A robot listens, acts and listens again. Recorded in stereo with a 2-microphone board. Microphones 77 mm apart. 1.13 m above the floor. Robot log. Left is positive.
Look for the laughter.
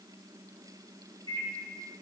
cmd idle
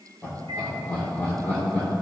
note: The laughter: about 25° left or 155° left.
cmd yaw +25
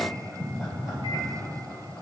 end: Found it: laughter, straight ahead, over 4 m away.